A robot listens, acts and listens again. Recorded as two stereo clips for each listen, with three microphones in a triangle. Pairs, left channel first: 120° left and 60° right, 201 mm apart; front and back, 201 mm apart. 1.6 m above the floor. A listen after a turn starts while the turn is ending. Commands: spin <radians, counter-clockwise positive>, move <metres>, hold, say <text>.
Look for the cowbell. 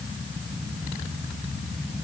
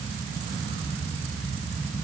hold
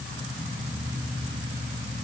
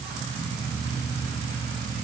hold
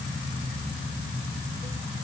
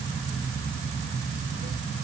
say I can't make out a cowbell.